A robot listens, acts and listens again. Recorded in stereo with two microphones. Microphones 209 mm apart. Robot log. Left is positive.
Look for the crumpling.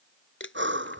note: The crumpling: about 60° left or 120° left.
cmd yaw +60
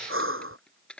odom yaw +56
end: Found it: crumpling, straight ahead.